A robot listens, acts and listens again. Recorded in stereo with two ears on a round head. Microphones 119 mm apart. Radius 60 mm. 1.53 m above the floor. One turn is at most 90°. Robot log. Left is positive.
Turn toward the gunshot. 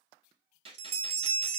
note: The gunshot: about 45° right or 135° right.
cmd yaw -45
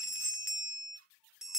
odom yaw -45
cmd idle
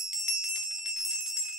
end: I heard a gunshot, but can't make it out now. It was about straight ahead or 90° right.